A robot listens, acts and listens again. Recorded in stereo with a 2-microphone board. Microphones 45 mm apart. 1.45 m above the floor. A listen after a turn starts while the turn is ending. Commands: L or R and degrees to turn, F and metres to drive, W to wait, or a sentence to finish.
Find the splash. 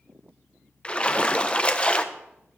L25
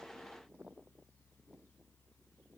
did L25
W
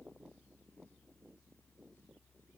I heard a splash, but can't make it out now. It was about straight ahead or 130° left.